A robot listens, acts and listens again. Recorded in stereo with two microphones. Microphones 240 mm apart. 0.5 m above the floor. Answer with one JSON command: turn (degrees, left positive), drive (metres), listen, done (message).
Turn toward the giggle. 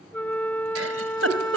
{"turn": -70}
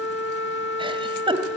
{"turn": -20}
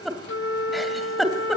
{"done": "Found it: a giggle, straight ahead, 2 to 4 m away."}